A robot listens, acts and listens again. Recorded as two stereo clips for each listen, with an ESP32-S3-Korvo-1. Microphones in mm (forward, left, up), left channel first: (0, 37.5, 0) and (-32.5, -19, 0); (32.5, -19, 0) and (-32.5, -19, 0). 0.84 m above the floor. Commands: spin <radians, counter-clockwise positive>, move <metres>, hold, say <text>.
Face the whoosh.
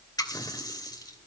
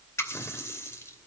hold
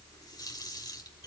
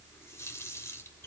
hold
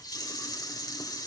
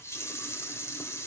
say I can't make out a whoosh, only a running tap.